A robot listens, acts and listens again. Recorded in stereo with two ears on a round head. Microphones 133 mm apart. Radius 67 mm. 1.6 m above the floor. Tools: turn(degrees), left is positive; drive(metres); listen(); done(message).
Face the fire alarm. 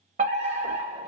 turn(degrees=-50)
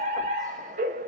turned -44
turn(degrees=-70)
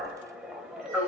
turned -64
done("Facing the fire alarm, under 1 m away.")